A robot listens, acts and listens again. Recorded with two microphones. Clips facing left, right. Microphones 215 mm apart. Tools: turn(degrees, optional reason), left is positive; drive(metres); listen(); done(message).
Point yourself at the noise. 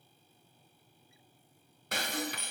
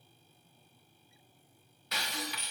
turn(degrees=50, reason="The breaking glass: about 50° left or 130° left.")
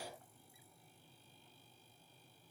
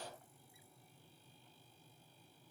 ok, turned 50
listen()
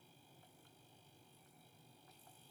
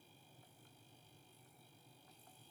done("I heard breaking glass, but can't make it out now. It was about straight ahead or 80° left.")